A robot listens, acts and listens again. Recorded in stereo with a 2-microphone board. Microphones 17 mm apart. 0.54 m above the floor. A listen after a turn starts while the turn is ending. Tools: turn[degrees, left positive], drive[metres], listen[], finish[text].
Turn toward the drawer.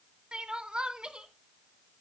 Action: listen[]
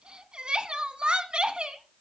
Action: listen[]
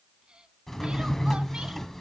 Thought: The drawer: about 15° left or 165° left.
Action: turn[15]
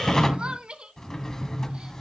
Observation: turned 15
Thought: So it is at 150° left.
Action: turn[150]
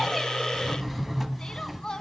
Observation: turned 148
Action: finish[Found it: a drawer, straight ahead.]